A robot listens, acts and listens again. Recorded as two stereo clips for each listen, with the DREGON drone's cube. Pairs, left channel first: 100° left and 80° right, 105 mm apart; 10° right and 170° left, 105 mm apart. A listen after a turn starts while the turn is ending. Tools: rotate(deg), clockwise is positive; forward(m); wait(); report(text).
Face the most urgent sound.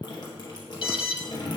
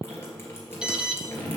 rotate(-90)
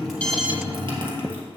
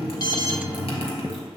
wait()
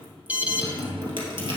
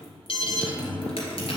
report("Found it: an alarm, straight ahead.")